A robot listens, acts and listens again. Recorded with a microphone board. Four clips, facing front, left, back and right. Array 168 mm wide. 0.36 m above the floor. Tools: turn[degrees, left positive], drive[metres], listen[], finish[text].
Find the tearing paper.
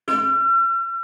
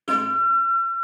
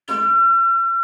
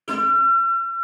Action: listen[]
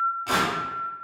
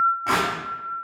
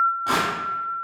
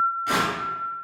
Thought: The tearing paper: 115° left.
Action: turn[115]
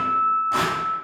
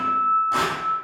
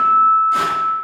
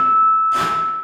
Action: listen[]
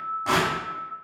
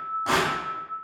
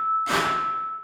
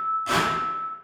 Thought: The tearing paper is now 40° left.
Action: turn[40]
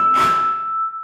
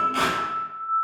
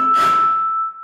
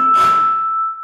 Action: listen[]
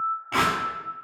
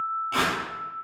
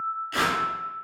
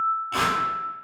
Action: finish[Facing the tearing paper.]